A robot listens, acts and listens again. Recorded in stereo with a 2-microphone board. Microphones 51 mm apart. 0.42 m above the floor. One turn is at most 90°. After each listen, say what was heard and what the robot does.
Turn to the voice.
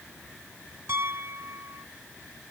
Keep listening.
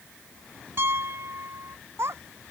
The child speaking: about 60° right or 120° right. Turn 60° right.
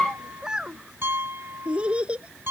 So it is at 25° right. Turn 25° right.
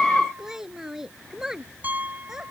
The child speaking is now 10° right. Turn 10° right.
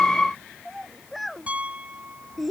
Found it: a child speaking, straight ahead.